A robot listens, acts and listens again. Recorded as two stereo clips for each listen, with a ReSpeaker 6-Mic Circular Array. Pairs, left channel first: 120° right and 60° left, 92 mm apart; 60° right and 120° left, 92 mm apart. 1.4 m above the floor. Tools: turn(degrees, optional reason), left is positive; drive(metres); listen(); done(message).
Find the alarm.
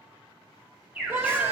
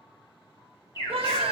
turn(degrees=-15, reason="The alarm: 15° right.")
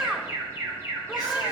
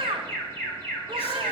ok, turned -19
done("Facing the alarm.")